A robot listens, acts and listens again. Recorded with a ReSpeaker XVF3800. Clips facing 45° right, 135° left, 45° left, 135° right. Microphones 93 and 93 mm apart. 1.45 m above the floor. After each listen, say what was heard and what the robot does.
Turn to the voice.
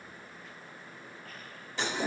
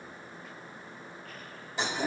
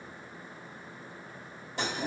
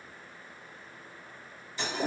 Keep listening.
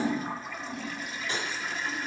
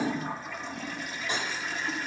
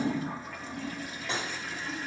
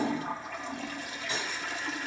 Keep listening.
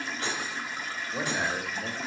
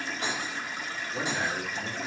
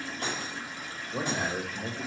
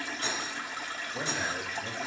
The man speaking: 30° left. Turn 30° left.
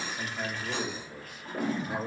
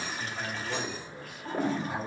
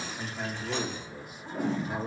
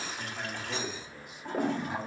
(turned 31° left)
Found it: a man speaking, straight ahead, 1 to 2 m away.